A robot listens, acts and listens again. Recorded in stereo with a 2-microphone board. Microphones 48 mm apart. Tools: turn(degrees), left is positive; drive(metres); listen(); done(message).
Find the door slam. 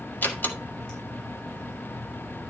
turn(degrees=40)
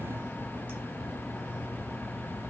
listen()
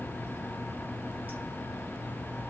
done("I heard a door slam, but can't make it out now. It was about straight ahead or 100° left.")